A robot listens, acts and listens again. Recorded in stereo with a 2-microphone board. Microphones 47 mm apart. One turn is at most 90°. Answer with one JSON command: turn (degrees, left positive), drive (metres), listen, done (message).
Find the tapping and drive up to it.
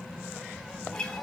{"listen": true}
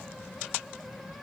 {"listen": true}
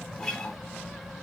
{"done": "I can't make out tapping, only a guitar."}